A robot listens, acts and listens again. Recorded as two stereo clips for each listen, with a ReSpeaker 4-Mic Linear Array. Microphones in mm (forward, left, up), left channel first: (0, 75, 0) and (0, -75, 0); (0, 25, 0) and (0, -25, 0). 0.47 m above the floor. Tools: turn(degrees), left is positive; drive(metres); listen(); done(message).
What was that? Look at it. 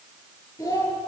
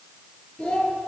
turn(degrees=20)
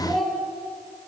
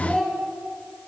done("Facing the child speaking, over 4 m away.")